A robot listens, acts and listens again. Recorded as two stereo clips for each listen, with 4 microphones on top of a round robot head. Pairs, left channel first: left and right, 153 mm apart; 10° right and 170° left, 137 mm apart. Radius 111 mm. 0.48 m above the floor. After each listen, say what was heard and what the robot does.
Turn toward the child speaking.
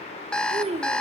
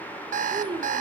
The child speaking: 130° right. Turn 130° right.
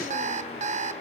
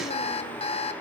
Keep listening.
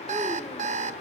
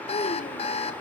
Keep listening.
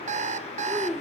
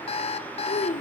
Facing the child speaking, 1 to 2 m away.